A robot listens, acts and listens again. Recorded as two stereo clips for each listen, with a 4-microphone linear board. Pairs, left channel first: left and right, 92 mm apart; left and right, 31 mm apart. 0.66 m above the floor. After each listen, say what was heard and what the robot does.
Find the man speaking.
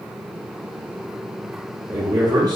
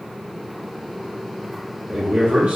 The man speaking: about 45° right or 135° right. Turn 45° right.
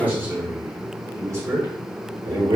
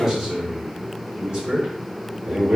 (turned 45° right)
So it is at 45° right. Turn 45° right.
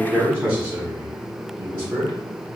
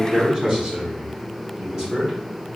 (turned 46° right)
The man speaking is now 20° right. Turn 20° right.
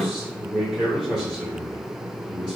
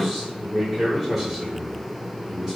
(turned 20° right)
Found it: a man speaking, straight ahead, 1 to 2 m away.